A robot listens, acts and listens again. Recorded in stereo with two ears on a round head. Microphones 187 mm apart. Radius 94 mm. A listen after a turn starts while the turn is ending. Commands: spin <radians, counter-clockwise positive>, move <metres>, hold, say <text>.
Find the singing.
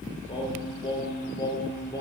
spin 0.35
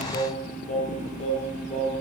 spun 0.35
spin 0.52
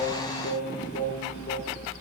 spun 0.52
spin 2.18
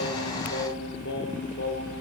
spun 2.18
spin 1.05
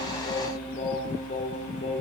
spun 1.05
spin 0.52
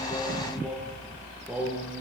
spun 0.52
say Found it: singing, straight ahead, over 4 m away.